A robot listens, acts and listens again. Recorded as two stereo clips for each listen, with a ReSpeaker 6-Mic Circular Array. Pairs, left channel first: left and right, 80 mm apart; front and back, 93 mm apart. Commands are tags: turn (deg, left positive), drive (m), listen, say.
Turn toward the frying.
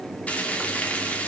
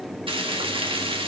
<turn deg="160"/>
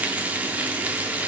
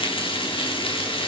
<turn deg="-20"/>
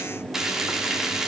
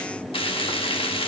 <say>Found it: frying, straight ahead.</say>